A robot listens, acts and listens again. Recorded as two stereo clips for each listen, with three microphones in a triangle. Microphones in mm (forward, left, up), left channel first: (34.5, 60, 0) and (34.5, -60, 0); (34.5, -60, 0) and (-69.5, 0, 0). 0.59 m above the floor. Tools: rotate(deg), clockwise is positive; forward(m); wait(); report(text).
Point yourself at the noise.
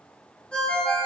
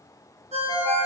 rotate(-170)
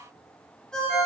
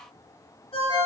report("Found it: a ringtone, straight ahead, 1 to 2 m away.")